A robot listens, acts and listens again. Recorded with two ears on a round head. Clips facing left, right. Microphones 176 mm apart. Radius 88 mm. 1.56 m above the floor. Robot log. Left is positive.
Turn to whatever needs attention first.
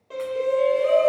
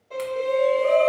note: The shout: about 20° left or 160° left.
cmd yaw +20
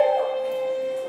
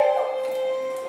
end: Found it: a shout, straight ahead, under 1 m away.